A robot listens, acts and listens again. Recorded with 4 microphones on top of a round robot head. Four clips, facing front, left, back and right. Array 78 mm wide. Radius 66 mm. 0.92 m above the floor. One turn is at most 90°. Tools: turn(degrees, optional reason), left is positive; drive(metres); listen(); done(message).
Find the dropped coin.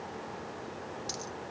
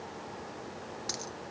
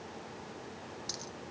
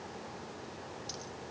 turn(degrees=70, reason="The dropped coin: 70° left.")
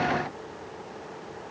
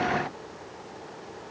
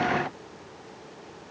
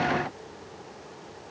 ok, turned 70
done("I heard a dropped coin from this way, but can't make it out now.")